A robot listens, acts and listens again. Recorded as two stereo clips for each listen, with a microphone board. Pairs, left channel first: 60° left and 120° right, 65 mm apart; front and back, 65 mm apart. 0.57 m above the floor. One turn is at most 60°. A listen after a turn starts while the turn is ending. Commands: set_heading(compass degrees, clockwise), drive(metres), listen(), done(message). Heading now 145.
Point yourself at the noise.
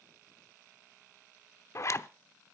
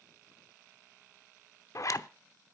set_heading(120)
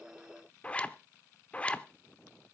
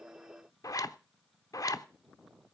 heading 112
set_heading(122)
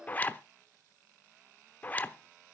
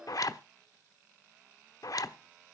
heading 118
done("Facing the zipper.")